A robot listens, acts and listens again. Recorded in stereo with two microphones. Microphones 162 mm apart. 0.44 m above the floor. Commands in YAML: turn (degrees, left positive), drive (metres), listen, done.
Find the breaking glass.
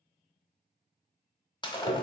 turn: 25
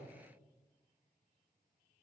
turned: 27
listen: true
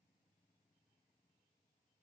done: "I heard breaking glass, but can't make it out now. It was about straight ahead or 125° left."